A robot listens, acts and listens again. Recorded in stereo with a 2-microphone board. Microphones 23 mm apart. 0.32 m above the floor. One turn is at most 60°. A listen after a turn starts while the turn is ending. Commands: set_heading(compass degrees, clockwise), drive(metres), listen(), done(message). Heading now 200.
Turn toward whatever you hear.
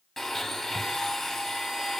set_heading(170)
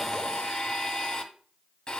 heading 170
set_heading(110)
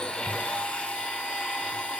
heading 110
set_heading(50)
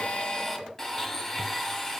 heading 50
set_heading(30)
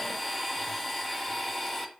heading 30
set_heading(20)
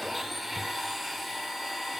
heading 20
done("Found it: a blender, straight ahead.")